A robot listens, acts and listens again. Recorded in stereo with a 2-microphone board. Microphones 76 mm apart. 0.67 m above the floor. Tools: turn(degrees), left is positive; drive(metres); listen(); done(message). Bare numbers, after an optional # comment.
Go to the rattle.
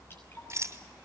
# The rattle: about 45° right or 135° right.
turn(-45)
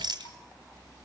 # So it is at 90° right.
turn(-90)
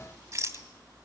# The rattle is now 40° right.
turn(-40)
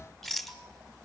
drive(1.0)
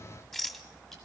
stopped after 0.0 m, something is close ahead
done("Blocked. The rattle is further on, straight ahead.")